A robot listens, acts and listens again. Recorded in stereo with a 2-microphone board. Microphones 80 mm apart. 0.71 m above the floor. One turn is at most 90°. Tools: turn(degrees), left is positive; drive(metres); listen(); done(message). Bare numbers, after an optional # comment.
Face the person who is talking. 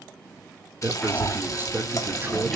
# The man speaking: about 30° right or 150° right.
turn(-30)
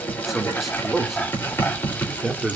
done("Found it: a man speaking, straight ahead, 2 to 4 m away.")